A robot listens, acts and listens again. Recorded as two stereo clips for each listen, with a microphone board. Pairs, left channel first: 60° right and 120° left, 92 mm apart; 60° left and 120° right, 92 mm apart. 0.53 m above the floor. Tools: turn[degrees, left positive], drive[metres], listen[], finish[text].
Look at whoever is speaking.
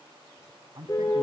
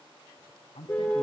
Thought: The man speaking: 75° left.
Action: turn[75]
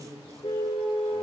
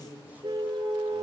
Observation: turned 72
Action: finish[Found it: a man speaking, straight ahead.]